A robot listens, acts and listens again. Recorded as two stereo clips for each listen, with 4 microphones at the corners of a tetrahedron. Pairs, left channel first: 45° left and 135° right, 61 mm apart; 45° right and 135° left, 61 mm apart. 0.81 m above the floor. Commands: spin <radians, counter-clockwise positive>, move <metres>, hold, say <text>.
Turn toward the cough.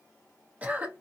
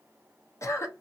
spin -1.22
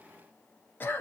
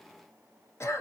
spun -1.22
spin -0.17
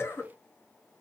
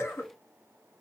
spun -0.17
say Found it: a cough, straight ahead.